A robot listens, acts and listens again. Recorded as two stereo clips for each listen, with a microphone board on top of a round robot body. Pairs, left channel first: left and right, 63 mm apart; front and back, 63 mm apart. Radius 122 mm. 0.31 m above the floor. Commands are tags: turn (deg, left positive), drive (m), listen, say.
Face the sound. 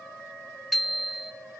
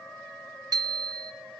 <turn deg="180"/>
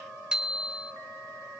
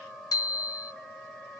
<turn deg="-15"/>
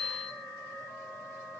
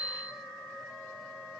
<say>Found it: a bicycle bell, straight ahead.</say>